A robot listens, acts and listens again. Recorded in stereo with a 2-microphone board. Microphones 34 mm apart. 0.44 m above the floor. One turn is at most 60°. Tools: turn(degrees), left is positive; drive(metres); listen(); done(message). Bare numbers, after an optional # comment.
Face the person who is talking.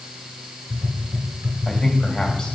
# The man speaking: about 20° left or 160° left.
turn(20)
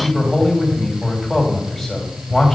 done("Facing the man speaking, 2 to 4 m away.")